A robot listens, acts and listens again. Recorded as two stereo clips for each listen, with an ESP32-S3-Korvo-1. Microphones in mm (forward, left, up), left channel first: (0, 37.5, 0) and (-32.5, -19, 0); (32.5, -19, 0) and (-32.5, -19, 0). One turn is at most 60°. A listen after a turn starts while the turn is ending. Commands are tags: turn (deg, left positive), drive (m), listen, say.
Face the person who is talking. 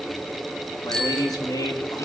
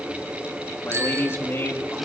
<turn deg="50"/>
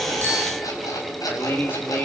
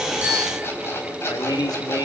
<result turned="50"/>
<say>Found it: a man speaking, straight ahead.</say>